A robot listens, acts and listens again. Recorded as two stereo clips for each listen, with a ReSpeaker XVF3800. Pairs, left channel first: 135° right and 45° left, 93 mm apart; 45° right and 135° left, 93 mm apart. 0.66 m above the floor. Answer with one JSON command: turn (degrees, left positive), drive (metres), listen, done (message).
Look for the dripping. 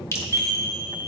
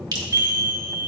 {"turn": 170}
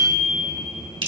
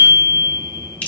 {"turn": 25}
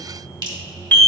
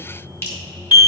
{"turn": 15}
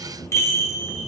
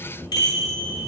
{"listen": true}
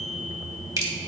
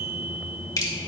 {"done": "Found it: dripping, straight ahead."}